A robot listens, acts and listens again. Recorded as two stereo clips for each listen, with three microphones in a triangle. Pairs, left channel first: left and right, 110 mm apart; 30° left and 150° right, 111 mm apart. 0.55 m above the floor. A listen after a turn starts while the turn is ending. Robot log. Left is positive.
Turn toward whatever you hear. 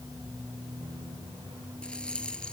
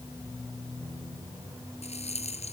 note: The rattle: 10° left.
cmd yaw +10
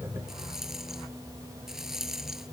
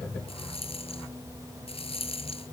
end: Facing the rattle.